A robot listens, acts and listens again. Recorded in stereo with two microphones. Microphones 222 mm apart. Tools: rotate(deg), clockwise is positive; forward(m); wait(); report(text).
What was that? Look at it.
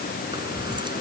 rotate(20)
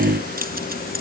rotate(135)
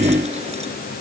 wait()
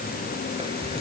rotate(25)
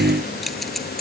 report("Facing the keys jangling.")